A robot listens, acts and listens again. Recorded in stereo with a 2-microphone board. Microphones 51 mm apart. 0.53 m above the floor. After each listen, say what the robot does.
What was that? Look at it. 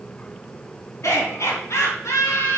Turn 90° left.
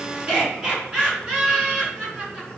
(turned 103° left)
Turn 20° right.
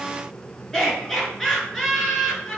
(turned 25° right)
Found it: laughter, straight ahead, over 4 m away.